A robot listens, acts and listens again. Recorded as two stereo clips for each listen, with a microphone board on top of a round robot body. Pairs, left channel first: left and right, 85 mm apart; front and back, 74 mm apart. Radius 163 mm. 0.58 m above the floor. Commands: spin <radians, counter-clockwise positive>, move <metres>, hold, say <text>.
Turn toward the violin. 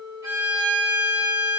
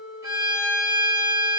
spin -2.53
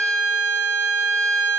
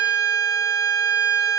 spin -0.61
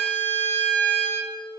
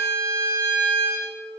spin 0.26
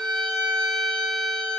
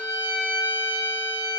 say Facing the violin.